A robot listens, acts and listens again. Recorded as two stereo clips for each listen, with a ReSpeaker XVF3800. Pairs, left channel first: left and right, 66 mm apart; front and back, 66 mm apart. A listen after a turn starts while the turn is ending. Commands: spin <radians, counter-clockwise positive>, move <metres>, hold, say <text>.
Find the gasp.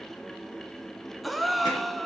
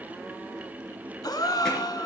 say Found it: a gasp, straight ahead, under 1 m away.